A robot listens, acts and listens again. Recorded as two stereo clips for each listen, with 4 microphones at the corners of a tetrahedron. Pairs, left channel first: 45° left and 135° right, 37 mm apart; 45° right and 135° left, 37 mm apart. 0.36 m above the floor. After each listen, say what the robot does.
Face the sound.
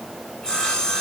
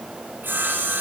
Turn 110° left.
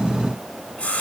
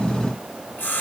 Turn 10° right.
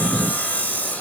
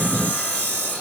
Found it: sawing, straight ahead.